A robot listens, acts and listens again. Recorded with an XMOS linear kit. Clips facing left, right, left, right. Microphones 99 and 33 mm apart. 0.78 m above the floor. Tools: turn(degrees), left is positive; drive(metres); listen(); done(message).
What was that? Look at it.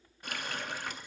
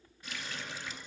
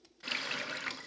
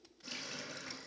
turn(degrees=55)
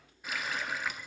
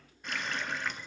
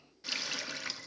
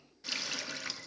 done("Found it: a running tap, straight ahead.")